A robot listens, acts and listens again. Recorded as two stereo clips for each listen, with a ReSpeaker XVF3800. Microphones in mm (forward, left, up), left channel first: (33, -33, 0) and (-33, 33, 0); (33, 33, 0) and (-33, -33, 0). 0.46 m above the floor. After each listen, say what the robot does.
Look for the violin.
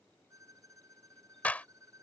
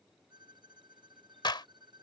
Turn 170° right.
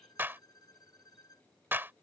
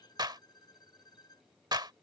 Found it: a violin, straight ahead.